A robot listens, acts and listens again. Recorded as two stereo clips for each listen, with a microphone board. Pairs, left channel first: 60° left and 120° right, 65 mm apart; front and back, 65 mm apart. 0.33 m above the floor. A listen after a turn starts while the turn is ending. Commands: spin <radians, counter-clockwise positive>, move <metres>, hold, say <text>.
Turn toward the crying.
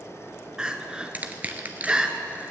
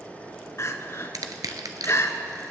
spin -0.79
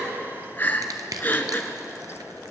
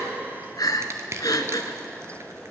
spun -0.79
say Facing the crying.